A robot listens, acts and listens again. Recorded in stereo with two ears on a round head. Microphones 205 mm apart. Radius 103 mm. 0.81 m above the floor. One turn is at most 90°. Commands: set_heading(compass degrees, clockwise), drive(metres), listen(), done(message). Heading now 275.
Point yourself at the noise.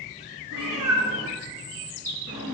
set_heading(350)
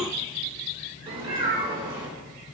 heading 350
set_heading(10)
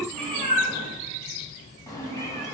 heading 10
set_heading(355)
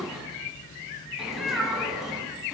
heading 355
done("Facing the cat meowing, 2 to 4 m away.")